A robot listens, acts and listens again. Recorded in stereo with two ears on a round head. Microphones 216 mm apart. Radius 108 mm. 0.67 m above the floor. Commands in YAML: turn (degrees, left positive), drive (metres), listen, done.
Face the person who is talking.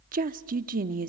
turn: -35
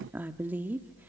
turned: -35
turn: -10
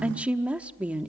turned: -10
done: "Found it: a woman speaking, straight ahead."